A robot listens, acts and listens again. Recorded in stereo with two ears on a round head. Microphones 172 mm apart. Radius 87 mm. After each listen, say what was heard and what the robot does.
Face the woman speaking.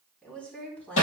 Turn 30° left.
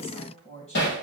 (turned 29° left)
So it is at 140° left. Turn 140° left.
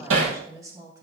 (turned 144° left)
The woman speaking is now 20° right. Turn 20° right.
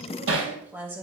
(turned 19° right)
The woman speaking is now 10° right. Turn 10° right.
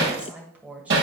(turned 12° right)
The woman speaking is now 10° right. Turn 10° right.
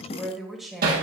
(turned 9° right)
Found it: a woman speaking, straight ahead.